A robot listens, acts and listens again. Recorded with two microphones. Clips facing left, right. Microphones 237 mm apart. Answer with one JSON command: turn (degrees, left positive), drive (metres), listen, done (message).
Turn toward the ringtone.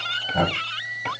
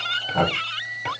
{"listen": true}
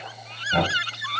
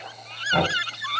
{"listen": true}
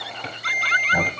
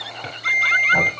{"turn": -30}
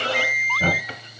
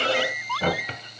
{"turn": 15}
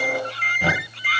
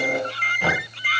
{"done": "Found it: a ringtone, straight ahead, 2 to 4 m away."}